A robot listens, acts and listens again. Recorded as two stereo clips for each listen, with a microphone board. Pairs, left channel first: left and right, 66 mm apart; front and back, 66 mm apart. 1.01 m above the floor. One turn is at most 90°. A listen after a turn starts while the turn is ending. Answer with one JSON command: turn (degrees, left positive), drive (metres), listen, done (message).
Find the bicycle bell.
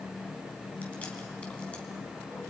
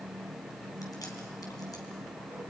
{"listen": true}
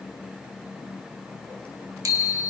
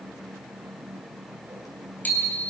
{"turn": -60}
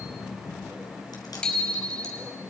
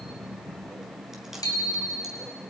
{"turn": 15}
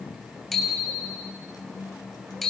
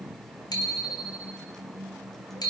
{"done": "Found it: a bicycle bell, straight ahead, over 4 m away."}